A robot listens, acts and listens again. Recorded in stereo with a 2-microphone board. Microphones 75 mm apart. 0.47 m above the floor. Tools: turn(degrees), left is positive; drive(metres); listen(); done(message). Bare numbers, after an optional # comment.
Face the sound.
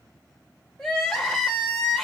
turn(30)
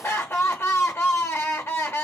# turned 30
# So it is at 140° left.
turn(140)
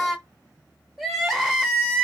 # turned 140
done("Facing the crying, under 1 m away.")